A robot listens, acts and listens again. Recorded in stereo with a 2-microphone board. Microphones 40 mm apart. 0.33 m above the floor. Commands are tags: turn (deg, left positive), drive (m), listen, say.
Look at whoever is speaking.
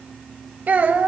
<turn deg="-40"/>
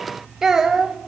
<turn deg="-15"/>
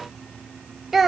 <say>Facing the child speaking.</say>